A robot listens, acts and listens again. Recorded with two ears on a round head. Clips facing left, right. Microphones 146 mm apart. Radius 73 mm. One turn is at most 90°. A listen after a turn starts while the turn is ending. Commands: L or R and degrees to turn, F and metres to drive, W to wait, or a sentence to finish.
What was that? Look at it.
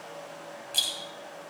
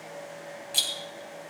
R30
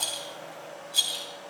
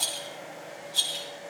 L20
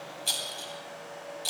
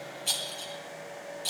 Found it: a rattle, straight ahead, 2 to 4 m away.